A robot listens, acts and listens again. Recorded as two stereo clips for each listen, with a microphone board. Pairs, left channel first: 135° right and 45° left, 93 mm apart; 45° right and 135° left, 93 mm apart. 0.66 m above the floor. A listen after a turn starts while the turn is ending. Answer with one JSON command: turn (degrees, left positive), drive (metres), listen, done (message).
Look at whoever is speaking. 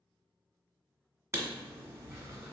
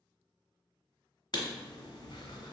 {"listen": true}
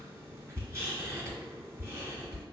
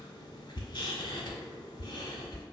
{"listen": true}
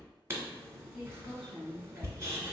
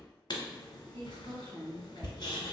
{"turn": 145}
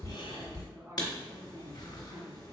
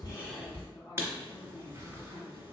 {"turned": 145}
{"done": "Facing the woman speaking."}